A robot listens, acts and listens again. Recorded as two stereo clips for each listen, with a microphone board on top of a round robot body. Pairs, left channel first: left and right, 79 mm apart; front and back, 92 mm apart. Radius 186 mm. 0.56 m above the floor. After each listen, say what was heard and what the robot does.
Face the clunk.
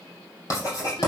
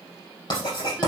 Keep listening.
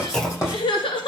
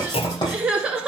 The clunk: 10° left. Turn 10° left.
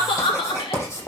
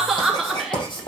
Facing where the clunk came from. I can't hear it now.